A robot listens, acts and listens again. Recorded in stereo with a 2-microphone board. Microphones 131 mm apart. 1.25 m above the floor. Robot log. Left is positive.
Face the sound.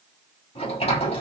note: The sliding door: about 55° left or 125° left.
cmd yaw +55
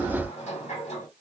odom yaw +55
note: So it is at 60° left.
cmd yaw +60
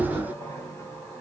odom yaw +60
note: The sliding door is now 15° left.
cmd yaw +15
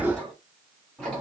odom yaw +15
end: Facing the sliding door, 2 to 4 m away.